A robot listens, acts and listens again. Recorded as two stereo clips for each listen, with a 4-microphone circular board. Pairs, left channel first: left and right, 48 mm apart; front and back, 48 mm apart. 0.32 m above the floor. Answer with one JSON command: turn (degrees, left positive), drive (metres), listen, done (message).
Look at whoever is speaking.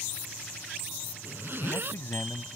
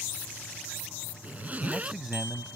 {"turn": 100}
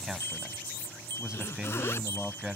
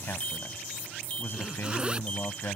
{"turn": -20}
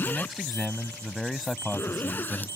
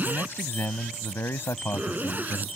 {"done": "Facing the man speaking."}